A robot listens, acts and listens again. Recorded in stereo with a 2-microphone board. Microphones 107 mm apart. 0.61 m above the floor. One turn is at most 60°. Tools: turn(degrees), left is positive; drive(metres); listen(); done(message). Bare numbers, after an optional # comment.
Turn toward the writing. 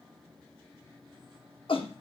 listen()
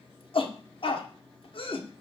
listen()
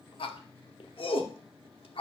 done("I can't make out writing to turn to.")